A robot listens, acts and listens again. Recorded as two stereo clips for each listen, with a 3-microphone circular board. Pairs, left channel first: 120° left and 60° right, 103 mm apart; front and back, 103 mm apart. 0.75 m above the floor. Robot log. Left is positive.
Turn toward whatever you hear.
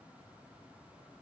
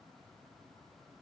cmd idle
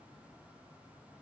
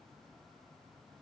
cmd idle
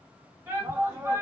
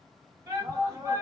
note: The shout: 130° right.
cmd yaw -130
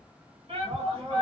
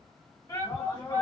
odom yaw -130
note: The shout is now 55° right.
cmd yaw -55
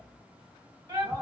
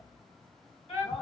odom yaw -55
note: The shout is now 15° right.
cmd yaw -15
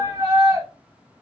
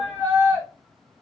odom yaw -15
note: The shout is now 10° right.
cmd yaw -10
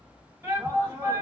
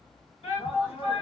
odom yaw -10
end: Found it: a shout, straight ahead, 1 to 2 m away.